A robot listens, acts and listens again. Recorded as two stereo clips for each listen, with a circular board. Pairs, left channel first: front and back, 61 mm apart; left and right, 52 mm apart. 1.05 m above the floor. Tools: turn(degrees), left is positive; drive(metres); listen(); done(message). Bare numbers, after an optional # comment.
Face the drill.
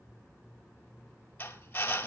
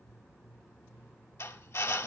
# The drill: 60° left.
turn(60)
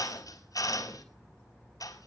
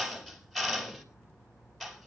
done("Facing the drill, over 4 m away.")